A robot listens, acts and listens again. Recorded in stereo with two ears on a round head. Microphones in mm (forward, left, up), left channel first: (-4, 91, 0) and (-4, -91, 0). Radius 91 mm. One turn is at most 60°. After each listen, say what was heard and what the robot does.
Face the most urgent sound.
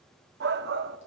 The shout: about 55° right or 125° right. Turn 55° right.
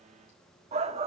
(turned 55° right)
So it is at 40° right. Turn 40° right.
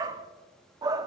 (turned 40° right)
The shout is now 25° right. Turn 25° right.
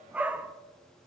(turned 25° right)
The shout is now 10° right. Turn 10° right.
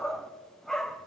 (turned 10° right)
Facing the shout, under 1 m away.